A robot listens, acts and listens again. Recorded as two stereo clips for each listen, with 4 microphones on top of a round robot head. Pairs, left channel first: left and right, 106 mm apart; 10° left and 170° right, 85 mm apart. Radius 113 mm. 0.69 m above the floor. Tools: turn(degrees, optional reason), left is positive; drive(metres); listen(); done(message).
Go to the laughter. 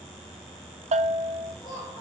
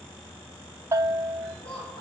turn(degrees=30, reason="The laughter: 30° left.")
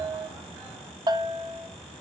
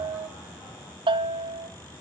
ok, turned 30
listen()
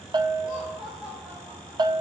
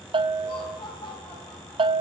turn(degrees=-10, reason="The laughter is now 10° right.")
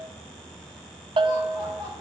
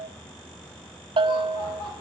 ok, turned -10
drive(metres=1.0)
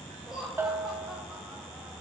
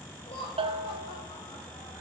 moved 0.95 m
drive(metres=1.0)
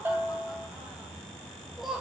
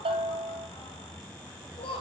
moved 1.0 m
drive(metres=1.0)
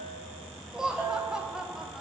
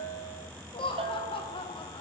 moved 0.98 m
drive(metres=1.0)
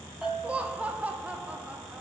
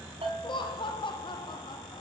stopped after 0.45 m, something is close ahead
turn(degrees=-15, reason="The laughter is now 15° right.")
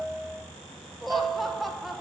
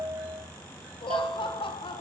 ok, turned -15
done("Arrived at the laughter, straight ahead.")